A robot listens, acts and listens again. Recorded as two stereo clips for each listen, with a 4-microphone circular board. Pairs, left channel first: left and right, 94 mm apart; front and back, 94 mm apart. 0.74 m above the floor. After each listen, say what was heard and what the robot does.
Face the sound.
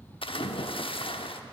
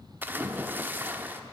The splash: 110° left. Turn 110° left.
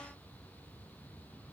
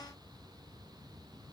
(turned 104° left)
I heard a splash from this way, but can't make it out now.